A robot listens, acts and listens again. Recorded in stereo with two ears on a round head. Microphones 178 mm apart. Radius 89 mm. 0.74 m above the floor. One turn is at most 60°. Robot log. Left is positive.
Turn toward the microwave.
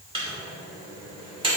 note: The microwave: about 25° right or 155° right.
cmd yaw -25
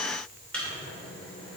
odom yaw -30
end: Facing the microwave.